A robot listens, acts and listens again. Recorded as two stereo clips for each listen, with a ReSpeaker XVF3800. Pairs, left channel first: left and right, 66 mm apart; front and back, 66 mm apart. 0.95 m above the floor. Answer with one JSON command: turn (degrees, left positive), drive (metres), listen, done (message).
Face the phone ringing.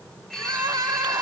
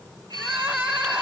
{"turn": 175}
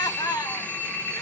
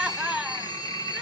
{"turn": 25}
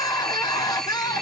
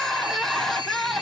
{"done": "Found it: a phone ringing, straight ahead."}